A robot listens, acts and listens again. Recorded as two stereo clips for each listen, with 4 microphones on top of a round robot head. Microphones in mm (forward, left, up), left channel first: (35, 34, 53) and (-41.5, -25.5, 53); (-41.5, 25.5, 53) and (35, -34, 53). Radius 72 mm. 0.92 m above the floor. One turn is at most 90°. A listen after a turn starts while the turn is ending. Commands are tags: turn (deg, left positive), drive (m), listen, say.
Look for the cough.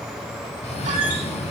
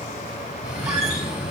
<turn deg="50"/>
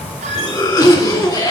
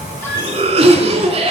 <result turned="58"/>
<turn deg="-10"/>
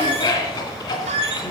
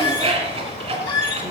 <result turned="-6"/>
<say>Facing the cough.</say>